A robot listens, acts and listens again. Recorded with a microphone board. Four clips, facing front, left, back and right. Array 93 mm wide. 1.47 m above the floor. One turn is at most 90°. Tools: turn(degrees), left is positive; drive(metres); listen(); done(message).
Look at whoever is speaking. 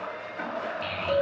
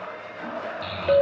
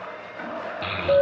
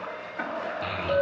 turn(degrees=-90)
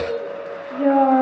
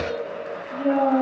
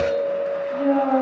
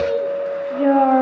turn(degrees=-60)
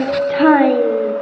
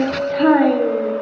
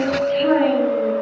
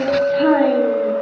done("Facing the child speaking, 1 to 2 m away.")